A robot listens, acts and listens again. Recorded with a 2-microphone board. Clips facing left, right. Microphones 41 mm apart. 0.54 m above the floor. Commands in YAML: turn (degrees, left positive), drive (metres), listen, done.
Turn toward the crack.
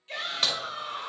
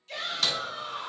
turn: 35
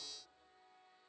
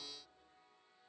listen: true
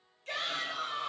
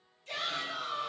done: "I heard a crack, but can't make it out now. It was about straight ahead or 110° left."